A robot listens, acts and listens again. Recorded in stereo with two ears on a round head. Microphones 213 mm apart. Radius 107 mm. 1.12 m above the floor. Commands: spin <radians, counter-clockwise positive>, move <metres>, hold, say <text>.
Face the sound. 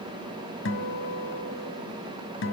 spin 0.96
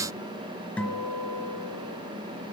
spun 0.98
say Facing the guitar.